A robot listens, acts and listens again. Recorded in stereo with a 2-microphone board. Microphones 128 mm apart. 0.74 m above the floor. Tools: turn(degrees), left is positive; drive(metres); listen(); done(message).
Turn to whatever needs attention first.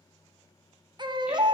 turn(degrees=-35)
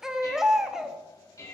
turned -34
done("Found it: a baby crying, straight ahead.")